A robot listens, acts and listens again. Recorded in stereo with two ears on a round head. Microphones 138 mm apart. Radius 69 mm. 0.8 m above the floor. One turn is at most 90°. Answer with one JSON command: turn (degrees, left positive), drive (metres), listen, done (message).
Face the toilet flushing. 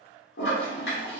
{"turn": 90}
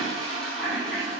{"done": "Facing the toilet flushing, 1 to 2 m away."}